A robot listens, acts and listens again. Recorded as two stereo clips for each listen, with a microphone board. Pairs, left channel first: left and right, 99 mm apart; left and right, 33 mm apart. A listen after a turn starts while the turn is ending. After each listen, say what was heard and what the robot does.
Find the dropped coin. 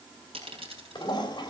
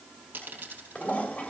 The dropped coin: about 70° right or 110° right. Turn 70° right.
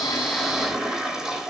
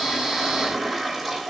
Keep listening.
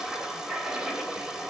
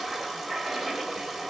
I heard a dropped coin, but can't make it out now. It was about straight ahead or 40° right.